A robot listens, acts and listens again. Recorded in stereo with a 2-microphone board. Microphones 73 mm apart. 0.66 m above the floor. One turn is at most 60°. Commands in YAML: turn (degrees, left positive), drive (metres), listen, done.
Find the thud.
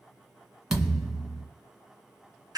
turn: -30
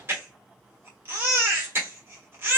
listen: true
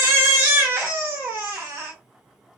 done: "I heard a thud, but can't make it out now. It was about 20° left or 140° right."